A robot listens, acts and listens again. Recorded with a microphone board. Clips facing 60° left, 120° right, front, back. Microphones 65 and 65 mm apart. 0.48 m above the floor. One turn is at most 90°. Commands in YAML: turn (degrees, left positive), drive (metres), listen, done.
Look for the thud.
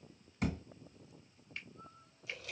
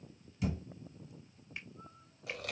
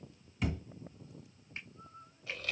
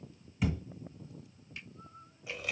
turn: 90
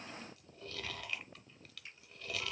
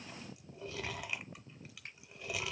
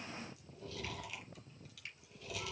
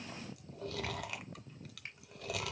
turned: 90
done: "Facing where the thud came from. I can't hear it now."